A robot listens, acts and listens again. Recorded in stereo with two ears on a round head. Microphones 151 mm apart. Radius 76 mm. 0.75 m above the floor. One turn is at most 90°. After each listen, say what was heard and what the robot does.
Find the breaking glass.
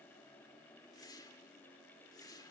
Keep listening.
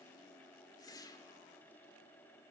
Keep listening.
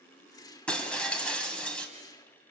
Turn 30° left.
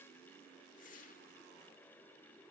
Keep listening.
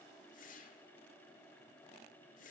I heard breaking glass, but can't make it out now. It was about 25° right or 145° left.